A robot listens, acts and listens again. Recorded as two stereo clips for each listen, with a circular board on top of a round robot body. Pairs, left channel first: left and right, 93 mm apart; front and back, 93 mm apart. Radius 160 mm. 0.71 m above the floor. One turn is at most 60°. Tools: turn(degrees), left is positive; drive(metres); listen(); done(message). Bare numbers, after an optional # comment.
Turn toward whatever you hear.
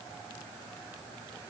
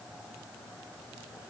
listen()
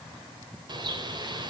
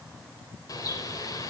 # The bird: 50° right.
turn(-50)
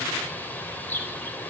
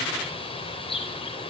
# The bird is now 20° left.
turn(20)
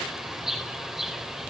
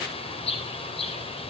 done("Facing the bird.")